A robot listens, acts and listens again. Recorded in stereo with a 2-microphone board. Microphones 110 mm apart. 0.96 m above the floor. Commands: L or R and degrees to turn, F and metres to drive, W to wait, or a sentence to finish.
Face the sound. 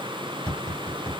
R30
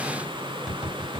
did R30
Found it: tapping, straight ahead, 2 to 4 m away.